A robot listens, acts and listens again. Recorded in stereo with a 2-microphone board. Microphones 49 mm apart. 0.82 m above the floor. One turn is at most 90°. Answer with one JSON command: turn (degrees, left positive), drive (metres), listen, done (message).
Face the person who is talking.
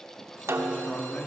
{"turn": 30}
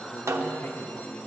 {"turn": 90}
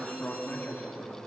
{"turn": 35}
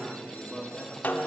{"done": "Found it: a man speaking, straight ahead, 1 to 2 m away."}